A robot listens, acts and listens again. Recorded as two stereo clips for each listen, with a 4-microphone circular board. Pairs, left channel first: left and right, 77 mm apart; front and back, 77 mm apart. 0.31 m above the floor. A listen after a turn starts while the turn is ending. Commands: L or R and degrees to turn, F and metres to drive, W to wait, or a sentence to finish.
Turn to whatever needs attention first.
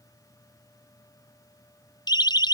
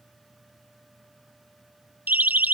L110
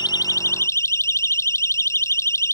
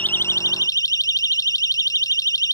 L40
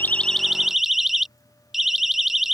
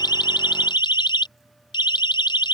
Facing the siren.